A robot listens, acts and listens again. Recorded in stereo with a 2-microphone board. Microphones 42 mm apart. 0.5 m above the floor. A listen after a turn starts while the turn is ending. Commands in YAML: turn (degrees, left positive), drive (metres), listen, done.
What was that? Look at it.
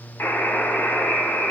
turn: 70
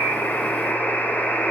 turn: 45
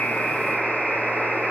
turn: -10
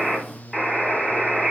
done: "Facing the buzzer, 2 to 4 m away."